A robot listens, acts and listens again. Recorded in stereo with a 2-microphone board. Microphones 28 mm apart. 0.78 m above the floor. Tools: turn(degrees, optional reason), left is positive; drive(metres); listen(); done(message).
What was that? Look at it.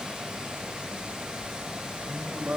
turn(degrees=-75, reason="The singing: about 75° right or 105° right.")
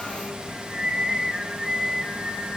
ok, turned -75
turn(degrees=-15, reason="So it is at 15° right.")
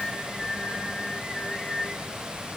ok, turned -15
turn(degrees=10, reason="The singing is now 10° left.")
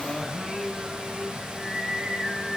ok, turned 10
done("Facing the singing.")